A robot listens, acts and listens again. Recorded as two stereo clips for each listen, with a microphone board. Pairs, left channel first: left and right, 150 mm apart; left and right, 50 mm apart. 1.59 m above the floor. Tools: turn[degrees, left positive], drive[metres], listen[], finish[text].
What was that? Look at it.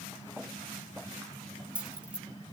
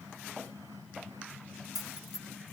Action: turn[-30]
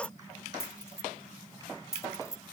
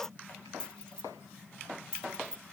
Thought: So it is at 20° left.
Action: turn[20]
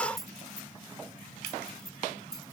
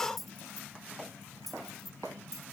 Action: finish[Facing the keys jangling.]